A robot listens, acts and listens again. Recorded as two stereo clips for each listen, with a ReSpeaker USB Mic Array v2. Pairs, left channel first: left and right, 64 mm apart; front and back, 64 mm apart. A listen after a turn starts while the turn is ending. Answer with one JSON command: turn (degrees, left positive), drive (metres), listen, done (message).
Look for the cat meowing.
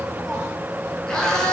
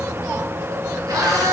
{"turn": 170}
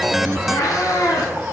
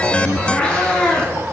{"turn": 75}
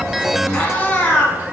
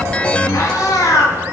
{"turn": 30}
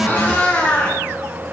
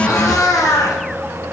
{"turn": 15}
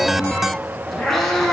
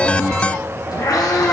{"done": "Facing the cat meowing, 1 to 2 m away."}